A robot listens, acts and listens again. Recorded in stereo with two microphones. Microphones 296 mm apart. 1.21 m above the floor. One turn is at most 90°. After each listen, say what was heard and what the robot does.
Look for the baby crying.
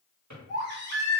The baby crying: about 35° right or 145° right. Turn 35° right.
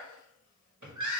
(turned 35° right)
So it is at 105° right. Turn 90° right.
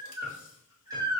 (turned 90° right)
The baby crying is now 10° right. Turn 10° right.
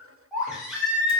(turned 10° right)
Facing the baby crying.